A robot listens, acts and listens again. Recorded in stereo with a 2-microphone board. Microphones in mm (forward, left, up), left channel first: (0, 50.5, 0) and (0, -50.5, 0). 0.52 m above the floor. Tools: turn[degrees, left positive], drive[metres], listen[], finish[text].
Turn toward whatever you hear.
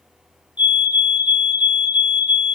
Thought: The fire alarm: about 50° left or 130° left.
Action: turn[50]
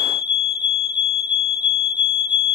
Thought: So it is at 60° left.
Action: turn[60]
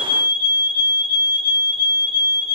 Thought: The fire alarm is now 10° right.
Action: turn[-10]
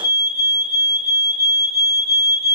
Action: finish[Found it: a fire alarm, straight ahead.]